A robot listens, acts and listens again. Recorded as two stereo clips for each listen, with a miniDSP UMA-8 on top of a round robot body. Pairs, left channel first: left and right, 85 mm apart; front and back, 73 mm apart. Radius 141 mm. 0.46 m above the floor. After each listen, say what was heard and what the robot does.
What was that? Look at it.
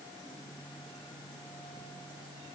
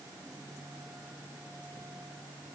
Keep listening.
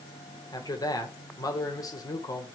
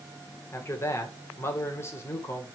The man speaking: 50° left. Turn 50° left.
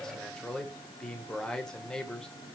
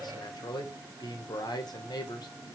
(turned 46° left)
The man speaking is now 10° left. Turn 10° left.
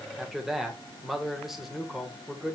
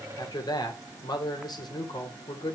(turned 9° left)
Facing the man speaking.